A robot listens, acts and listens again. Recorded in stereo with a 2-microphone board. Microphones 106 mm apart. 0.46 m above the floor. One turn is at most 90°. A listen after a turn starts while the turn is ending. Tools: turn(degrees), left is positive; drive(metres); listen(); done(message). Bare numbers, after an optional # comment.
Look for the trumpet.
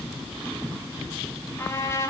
# The trumpet: about 30° left or 150° left.
turn(30)
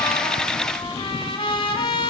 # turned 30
# So it is at 125° left.
turn(90)
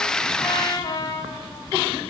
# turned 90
# The trumpet is now 40° left.
turn(40)
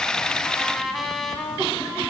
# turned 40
done("Facing the trumpet, 1 to 2 m away.")